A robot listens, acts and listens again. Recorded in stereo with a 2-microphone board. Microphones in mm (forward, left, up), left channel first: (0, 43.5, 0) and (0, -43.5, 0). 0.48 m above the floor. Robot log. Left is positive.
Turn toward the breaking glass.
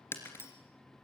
note: The breaking glass: about 25° left or 155° left.
cmd yaw +25
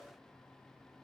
cmd idle
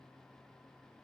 end: I heard breaking glass, but can't make it out now. It was about straight ahead or 130° left.